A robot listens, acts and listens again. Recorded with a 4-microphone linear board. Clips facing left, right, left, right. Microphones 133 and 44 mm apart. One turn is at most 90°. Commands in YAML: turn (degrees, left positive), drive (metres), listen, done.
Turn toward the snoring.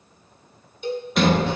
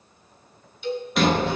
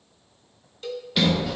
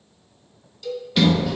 listen: true
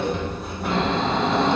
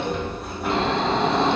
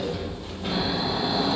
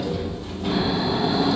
turn: -30
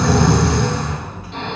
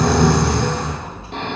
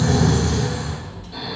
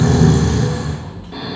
turn: -90
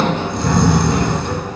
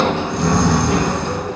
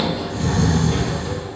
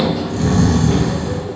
turn: -60
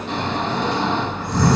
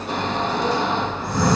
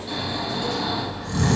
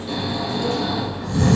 turn: -10
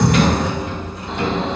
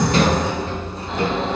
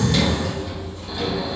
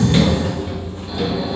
done: "Found it: snoring, straight ahead, 2 to 4 m away."